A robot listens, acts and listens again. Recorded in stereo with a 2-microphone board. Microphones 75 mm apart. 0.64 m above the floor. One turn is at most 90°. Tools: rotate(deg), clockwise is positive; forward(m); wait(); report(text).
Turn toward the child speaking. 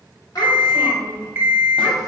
rotate(-50)
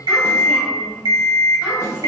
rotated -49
wait()
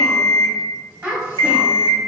rotate(20)
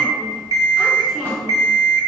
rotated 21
wait()
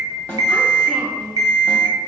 report("Facing the child speaking.")